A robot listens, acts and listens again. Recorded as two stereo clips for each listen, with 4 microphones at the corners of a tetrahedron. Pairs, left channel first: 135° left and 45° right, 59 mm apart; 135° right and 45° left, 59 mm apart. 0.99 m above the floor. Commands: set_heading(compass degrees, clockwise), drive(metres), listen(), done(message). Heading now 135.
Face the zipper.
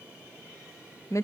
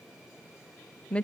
listen()
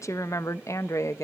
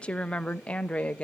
listen()
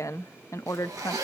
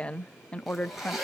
set_heading(175)
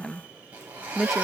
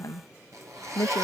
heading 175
set_heading(155)
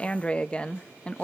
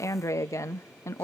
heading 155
listen()
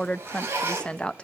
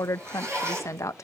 set_heading(145)
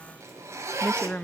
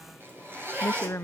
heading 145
done("Facing the zipper.")